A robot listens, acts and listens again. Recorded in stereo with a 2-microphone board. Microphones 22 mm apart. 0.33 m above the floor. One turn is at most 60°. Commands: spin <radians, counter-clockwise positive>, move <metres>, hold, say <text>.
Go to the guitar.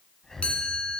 hold
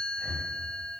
hold
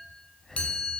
say I can't make out a guitar to turn to.